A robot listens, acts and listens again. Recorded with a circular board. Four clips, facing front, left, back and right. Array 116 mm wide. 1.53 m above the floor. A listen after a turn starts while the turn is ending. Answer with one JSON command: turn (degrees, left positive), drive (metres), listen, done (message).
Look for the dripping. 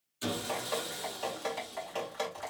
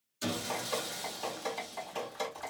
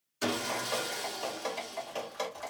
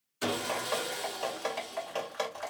{"turn": -80}
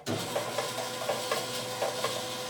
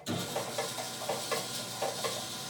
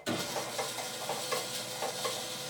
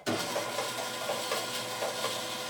{"done": "Found it: dripping, straight ahead, 2 to 4 m away."}